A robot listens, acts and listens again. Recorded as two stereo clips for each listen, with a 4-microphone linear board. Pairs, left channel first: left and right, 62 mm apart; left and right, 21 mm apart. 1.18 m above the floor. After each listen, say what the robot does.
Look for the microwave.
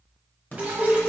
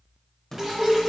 Turn 25° left.
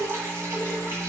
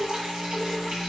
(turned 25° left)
Keep listening.
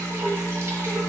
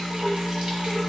Turn 130° left.
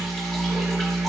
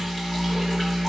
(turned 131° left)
Found it: a microwave, straight ahead, 1 to 2 m away.